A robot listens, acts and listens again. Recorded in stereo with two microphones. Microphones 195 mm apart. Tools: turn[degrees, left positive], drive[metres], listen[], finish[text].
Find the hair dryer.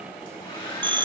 Thought: The hair dryer: about 30° left or 150° left.
Action: turn[30]
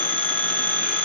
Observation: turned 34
Action: listen[]
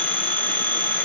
Action: listen[]
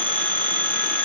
Action: finish[I heard a hair dryer, but can't make it out now. It was about 5° right or 115° left.]